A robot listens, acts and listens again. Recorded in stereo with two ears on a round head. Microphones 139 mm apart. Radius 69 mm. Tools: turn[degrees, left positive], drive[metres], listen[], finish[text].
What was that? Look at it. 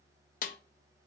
Thought: The snare drum: about 60° left or 120° left.
Action: turn[60]
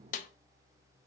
Thought: So it is at 55° left.
Action: turn[55]
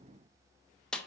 Action: finish[Found it: a snare drum, straight ahead.]